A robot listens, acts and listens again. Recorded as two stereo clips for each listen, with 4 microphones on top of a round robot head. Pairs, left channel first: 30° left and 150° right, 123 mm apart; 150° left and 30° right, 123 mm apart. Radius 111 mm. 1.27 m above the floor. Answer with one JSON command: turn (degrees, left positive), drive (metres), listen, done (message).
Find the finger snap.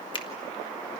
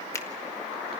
{"turn": 80}
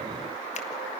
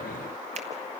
{"listen": true}
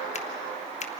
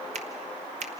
{"done": "Facing the finger snap."}